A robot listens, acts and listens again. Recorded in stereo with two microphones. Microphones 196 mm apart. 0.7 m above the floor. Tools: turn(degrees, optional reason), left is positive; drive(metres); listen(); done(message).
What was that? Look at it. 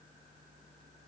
listen()
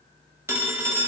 turn(degrees=-30)
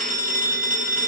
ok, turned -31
turn(degrees=-135, reason="So it is at 135° right.")
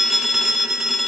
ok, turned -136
done("Facing the phone ringing.")